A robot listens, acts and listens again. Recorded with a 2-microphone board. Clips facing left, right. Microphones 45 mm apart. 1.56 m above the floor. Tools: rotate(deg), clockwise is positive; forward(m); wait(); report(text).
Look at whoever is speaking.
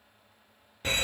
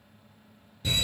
wait()
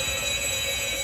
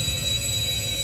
wait()
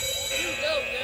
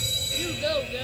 rotate(-30)
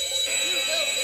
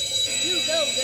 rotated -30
rotate(20)
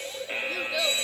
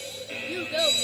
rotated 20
rotate(15)
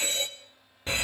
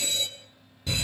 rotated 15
wait()
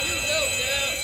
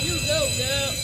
wait()
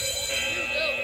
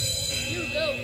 report("Found it: a child speaking, straight ahead, under 1 m away.")